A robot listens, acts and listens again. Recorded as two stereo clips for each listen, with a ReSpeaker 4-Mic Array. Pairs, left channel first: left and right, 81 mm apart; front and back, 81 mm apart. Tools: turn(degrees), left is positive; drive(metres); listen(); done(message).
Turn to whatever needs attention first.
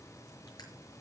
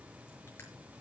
listen()
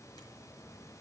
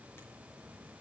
listen()
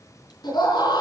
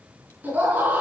turn(degrees=110)
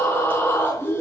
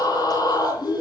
turn(degrees=25)
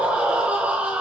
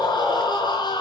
turn(degrees=-15)
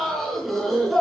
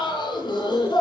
done("Facing the scream.")